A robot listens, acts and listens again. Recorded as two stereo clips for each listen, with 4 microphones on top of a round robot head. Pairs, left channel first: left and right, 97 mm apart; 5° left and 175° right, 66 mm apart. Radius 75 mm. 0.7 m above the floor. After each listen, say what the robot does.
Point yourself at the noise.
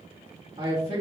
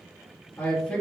Turn 50° right.
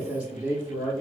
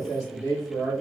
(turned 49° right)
Turn 25° right.
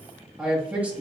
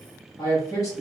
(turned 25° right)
Turn 20° right.
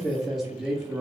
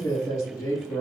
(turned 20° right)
Turn 15° right.
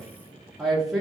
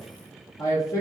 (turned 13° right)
Turn 15° right.
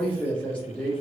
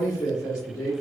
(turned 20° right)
Facing the man speaking.